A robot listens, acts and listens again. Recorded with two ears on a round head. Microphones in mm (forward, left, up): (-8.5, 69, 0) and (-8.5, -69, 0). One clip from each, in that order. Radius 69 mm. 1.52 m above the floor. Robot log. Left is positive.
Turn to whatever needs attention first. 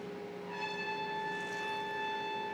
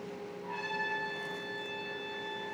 cmd idle
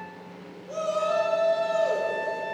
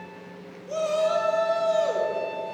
note: The shout: about 45° right or 135° right.
cmd yaw -45
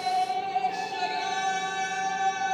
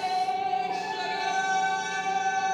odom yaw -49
end: Facing the shout, 1 to 2 m away.